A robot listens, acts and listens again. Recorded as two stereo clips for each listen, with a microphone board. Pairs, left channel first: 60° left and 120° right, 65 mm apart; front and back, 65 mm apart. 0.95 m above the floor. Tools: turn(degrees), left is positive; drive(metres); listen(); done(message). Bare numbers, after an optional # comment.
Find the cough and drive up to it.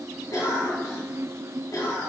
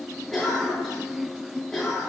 # The cough: 90° left.
turn(90)
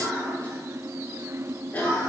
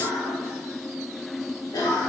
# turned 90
drive(1.0)
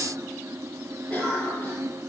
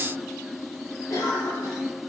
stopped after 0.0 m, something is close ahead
done("Something is in my way. I am facing the cough but have not reached it.")